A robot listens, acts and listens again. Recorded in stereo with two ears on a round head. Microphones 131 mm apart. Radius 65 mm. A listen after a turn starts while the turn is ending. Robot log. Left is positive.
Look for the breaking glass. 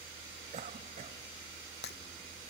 cmd yaw +90
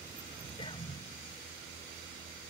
end: Facing where the breaking glass came from. I can't hear it now.